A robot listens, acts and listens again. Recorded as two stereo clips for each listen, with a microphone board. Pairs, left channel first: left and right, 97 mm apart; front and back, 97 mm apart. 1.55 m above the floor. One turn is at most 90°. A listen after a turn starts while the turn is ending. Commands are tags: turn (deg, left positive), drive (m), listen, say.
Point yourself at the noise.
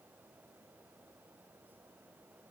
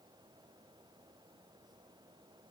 <listen/>
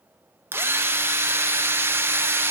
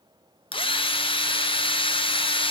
<turn deg="-25"/>
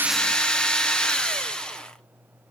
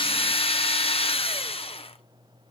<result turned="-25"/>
<say>Facing the drill, 1 to 2 m away.</say>